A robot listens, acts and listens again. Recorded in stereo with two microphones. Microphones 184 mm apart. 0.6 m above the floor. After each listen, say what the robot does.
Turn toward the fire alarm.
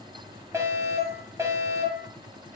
Turn 15° right.
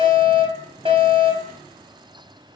Turn 150° right.
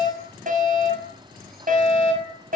Turn 45° right.
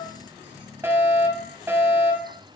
Turn 10° right.
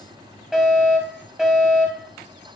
Found it: a fire alarm, straight ahead.